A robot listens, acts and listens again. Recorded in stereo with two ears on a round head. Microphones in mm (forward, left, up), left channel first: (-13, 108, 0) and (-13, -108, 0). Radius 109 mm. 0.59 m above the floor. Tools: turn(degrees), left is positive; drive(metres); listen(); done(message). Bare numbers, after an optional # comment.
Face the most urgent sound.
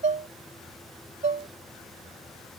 listen()
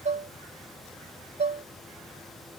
listen()
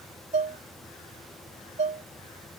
done("I can't make out anything urgent, only dishes clattering.")